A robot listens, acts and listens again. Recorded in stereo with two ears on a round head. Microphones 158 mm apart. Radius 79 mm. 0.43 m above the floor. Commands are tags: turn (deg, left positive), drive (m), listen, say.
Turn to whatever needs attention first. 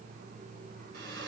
<listen/>
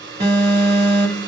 <turn deg="-30"/>
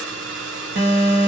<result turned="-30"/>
<turn deg="-115"/>
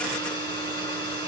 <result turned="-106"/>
<turn deg="-10"/>
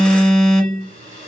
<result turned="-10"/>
<say>Found it: an alarm, straight ahead, 1 to 2 m away.</say>